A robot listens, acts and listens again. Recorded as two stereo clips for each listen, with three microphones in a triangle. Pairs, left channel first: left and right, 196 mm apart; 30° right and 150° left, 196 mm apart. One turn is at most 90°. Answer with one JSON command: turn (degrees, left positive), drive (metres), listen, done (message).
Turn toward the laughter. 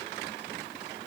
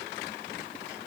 {"listen": true}
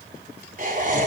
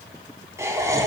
{"turn": -90}
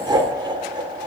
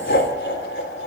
{"turn": -25}
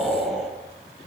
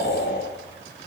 {"done": "Found it: laughter, straight ahead, over 4 m away."}